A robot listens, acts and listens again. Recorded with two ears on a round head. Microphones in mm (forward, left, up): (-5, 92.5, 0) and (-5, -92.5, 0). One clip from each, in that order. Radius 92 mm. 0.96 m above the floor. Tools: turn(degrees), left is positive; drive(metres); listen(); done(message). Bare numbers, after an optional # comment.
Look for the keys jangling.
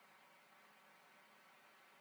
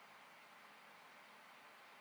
listen()
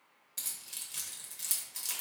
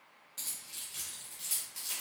# The keys jangling: about 25° left or 155° left.
turn(25)
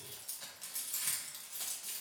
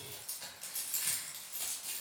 done("Found it: keys jangling, straight ahead.")